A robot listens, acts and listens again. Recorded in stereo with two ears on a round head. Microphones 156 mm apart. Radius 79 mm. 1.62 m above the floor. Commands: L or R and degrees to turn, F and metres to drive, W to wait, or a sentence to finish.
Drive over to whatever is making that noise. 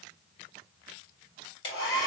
L25
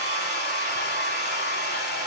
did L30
F1.0
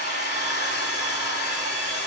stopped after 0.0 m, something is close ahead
Something is in my way. I am facing the hair dryer but have not reached it.